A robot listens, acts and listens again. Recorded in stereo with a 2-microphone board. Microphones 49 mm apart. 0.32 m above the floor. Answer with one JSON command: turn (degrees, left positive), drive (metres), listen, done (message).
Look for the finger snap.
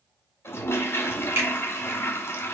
{"turn": -60}
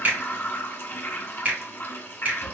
{"turn": -40}
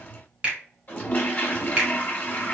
{"turn": -25}
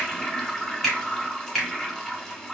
{"done": "Found it: a finger snap, straight ahead, 1 to 2 m away."}